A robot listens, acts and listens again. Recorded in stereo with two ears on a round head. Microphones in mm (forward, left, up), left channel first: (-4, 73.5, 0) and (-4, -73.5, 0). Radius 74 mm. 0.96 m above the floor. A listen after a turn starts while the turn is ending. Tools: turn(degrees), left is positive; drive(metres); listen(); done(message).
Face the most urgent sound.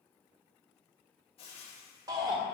turn(degrees=-25)
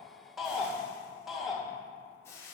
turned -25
done("Found it: a shout, straight ahead, 1 to 2 m away.")